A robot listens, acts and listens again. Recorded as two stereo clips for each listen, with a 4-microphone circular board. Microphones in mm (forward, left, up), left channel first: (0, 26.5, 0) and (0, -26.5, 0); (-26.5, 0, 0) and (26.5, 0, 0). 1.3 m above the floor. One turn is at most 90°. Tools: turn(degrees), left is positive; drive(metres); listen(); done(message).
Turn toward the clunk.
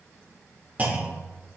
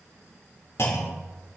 turn(degrees=-90)
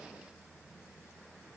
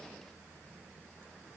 turn(degrees=-60)
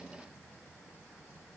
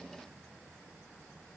done("Facing where the clunk came from. I can't hear it now.")